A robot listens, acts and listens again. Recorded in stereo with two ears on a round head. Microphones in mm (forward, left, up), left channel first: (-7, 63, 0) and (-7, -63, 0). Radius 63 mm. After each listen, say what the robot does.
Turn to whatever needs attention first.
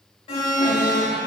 Turn 45° left.
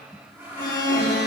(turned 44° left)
Turn 90° left.
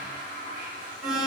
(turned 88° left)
Found it: an alarm, straight ahead.